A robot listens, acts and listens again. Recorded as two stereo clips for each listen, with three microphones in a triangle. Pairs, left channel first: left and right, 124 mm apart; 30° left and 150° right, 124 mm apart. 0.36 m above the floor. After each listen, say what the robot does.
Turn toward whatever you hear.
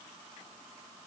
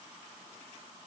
Keep listening.
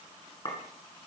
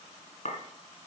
Turn 40° left.
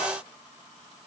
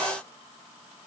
Keep listening.
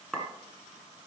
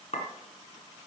Found it: a clink, straight ahead.